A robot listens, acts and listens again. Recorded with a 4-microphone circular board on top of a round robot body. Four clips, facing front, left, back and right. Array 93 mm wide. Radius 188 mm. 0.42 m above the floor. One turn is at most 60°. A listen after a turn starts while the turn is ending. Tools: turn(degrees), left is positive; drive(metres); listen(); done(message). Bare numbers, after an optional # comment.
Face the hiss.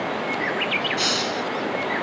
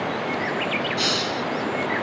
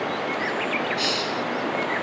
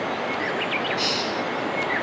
# The hiss: 40° left.
turn(40)
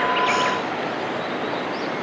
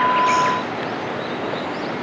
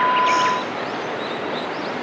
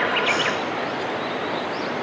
listen()
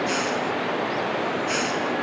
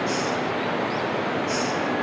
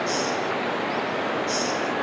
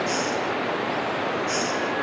done("Facing the hiss.")